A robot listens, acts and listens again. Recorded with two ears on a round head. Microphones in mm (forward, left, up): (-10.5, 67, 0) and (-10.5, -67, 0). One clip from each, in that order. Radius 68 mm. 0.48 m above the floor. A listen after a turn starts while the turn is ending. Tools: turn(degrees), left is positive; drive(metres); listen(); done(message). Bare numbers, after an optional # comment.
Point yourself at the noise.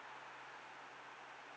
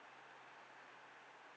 listen()
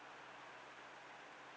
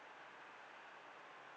listen()
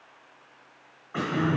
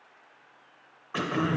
# The throat clearing: about 60° right or 120° right.
turn(-60)
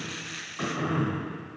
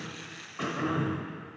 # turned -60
done("Facing the throat clearing.")